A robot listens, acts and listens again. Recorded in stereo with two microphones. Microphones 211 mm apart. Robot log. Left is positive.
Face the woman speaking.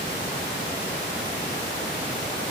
cmd idle
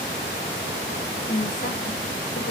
note: The woman speaking: about 35° left or 145° left.
cmd yaw +35
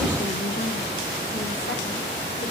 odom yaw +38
cmd idle
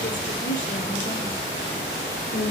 note: So it is at 115° left.
cmd yaw +115
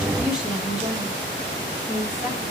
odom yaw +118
end: Facing the woman speaking, over 4 m away.